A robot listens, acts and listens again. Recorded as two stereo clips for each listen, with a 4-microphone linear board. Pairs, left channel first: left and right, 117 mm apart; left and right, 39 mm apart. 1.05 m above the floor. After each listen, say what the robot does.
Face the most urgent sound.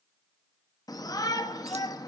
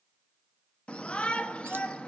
Turn 30° left.
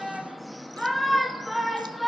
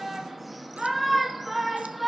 Facing the shout, 1 to 2 m away.